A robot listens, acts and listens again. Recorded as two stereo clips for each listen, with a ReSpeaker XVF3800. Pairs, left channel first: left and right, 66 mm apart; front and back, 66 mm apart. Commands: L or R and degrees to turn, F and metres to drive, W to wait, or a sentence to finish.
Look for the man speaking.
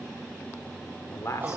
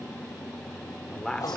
L80
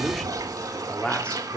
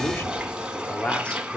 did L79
L55
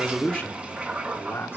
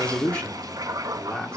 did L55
L65
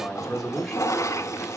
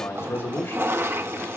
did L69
L10
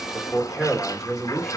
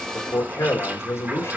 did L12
Found it: a man speaking, straight ahead.